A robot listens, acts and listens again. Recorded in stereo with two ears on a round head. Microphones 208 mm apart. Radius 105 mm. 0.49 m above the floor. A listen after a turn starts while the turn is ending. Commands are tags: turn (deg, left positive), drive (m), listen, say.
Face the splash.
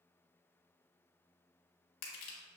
<listen/>
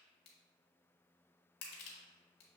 <listen/>
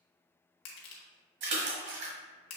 <turn deg="-55"/>
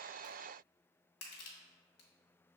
<listen/>
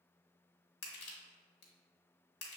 <say>I heard a splash, but can't make it out now. It was about straight ahead or 70° right.</say>